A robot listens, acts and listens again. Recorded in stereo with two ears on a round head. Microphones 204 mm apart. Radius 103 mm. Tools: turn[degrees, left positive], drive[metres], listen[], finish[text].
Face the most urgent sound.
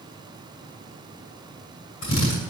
Action: listen[]
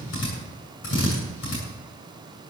Action: listen[]
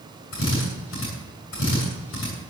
Action: finish[I can't make out anything urgent to turn to.]